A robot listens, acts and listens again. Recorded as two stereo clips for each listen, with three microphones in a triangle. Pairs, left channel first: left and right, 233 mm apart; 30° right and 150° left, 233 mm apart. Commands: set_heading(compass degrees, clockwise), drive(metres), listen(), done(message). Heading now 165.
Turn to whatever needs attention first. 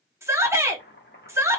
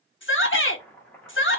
set_heading(175)
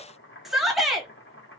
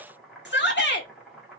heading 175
done("Found it: a shout, straight ahead, 1 to 2 m away.")